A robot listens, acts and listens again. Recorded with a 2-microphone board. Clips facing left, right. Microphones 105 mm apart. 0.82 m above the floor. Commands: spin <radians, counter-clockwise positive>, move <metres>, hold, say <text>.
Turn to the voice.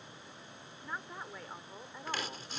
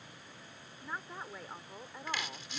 spin 0.52
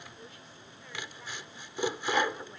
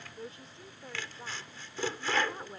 spin -0.52
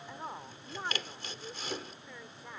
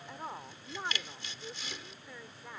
say Found it: a woman speaking, straight ahead.